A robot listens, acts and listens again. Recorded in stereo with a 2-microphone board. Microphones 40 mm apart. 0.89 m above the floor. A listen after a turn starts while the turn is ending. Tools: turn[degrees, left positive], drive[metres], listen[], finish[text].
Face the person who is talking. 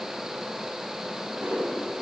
Action: listen[]
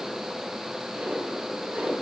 Action: listen[]
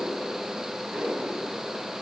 Action: finish[I can't make out anyone speaking to turn to.]